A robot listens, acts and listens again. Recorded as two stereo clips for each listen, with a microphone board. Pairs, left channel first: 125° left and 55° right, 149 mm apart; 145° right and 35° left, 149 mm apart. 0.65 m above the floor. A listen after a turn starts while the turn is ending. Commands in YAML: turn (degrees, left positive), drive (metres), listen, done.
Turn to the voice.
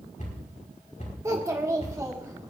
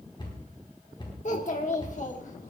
turn: -125
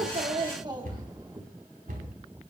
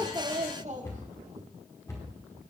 done: "Found it: a child speaking, straight ahead, 1 to 2 m away."